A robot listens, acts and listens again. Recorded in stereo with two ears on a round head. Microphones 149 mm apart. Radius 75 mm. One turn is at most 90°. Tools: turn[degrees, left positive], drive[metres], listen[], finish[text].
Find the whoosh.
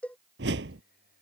Thought: The whoosh: about 70° right or 110° right.
Action: turn[-70]
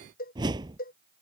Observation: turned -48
Thought: So it is at 25° right.
Action: turn[-25]
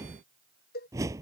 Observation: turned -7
Thought: The whoosh is now 20° right.
Action: turn[-20]
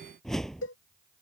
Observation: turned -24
Action: finish[Found it: a whoosh, straight ahead.]